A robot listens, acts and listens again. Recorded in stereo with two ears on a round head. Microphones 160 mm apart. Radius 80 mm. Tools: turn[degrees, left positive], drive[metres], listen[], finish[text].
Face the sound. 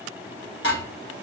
Thought: The dishes clattering: about 75° left or 105° left.
Action: turn[75]
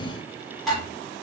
Action: finish[Facing the dishes clattering, 1 to 2 m away.]